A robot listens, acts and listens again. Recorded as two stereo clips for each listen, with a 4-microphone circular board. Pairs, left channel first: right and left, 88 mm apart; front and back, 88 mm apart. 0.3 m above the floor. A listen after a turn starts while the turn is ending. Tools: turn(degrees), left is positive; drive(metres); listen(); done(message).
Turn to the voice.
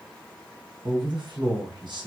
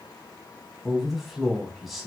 turn(degrees=90)
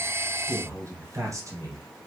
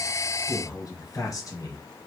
turn(degrees=40)
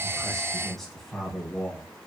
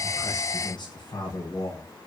done("Found it: a man speaking, straight ahead, 1 to 2 m away.")